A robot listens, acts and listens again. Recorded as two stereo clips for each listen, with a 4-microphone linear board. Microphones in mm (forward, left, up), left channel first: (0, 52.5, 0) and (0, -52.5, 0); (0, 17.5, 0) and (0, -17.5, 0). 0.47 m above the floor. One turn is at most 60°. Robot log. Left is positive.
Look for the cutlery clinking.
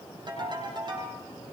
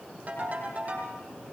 cmd idle
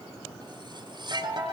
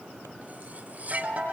note: The cutlery clinking: about 45° right or 135° right.
cmd yaw -45
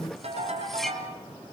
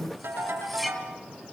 end: Found it: cutlery clinking, straight ahead.